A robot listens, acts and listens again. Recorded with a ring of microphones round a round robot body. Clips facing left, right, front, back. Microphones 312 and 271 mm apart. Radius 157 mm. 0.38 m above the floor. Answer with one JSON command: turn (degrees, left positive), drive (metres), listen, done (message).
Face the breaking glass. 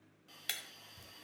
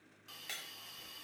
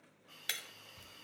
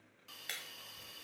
{"turn": 40}
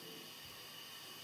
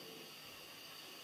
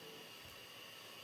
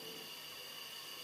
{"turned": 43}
{"done": "Facing where the breaking glass came from. I can't hear it now."}